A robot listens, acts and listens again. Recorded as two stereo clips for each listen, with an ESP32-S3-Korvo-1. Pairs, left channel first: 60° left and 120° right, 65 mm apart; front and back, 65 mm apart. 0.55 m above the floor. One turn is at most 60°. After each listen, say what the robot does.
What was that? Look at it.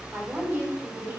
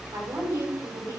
Turn 60° right.
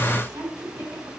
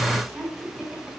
Turn 60° right.
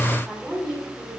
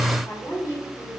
Turn 20° right.
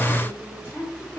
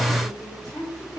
Found it: a woman speaking, straight ahead, over 4 m away.